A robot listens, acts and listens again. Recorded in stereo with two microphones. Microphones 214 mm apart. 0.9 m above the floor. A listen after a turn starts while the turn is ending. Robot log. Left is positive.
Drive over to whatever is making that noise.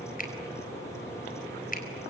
note: The finger snap: about 40° left or 140° left.
cmd yaw +40
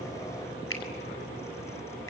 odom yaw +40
note: So it is at 100° left.
cmd yaw +100
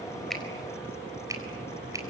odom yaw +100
note: The finger snap is now 15° right.
cmd yaw -15
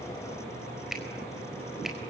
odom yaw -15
cmd fwd 1.0
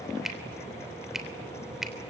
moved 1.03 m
cmd fwd 1.0
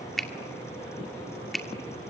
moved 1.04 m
cmd fwd 1.0
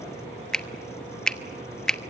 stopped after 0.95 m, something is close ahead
end: I am next to the finger snap.